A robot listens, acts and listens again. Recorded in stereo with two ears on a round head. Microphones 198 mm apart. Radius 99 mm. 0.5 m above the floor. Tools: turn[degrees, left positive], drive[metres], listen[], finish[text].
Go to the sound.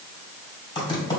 Thought: The typing on a keyboard: about 20° left or 160° left.
Action: turn[20]
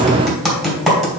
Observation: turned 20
Action: drive[1.0]
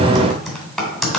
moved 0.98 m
Action: drive[1.0]
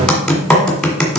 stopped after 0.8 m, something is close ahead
Action: finish[I am next to the typing on a keyboard.]